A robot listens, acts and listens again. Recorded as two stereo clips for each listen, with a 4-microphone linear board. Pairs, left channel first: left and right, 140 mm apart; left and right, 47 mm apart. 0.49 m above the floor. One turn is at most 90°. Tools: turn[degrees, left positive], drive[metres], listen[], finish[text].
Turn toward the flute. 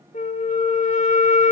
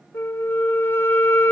Thought: The flute: about 60° left or 120° left.
Action: turn[60]
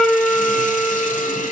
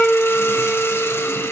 Action: finish[Found it: a flute, straight ahead.]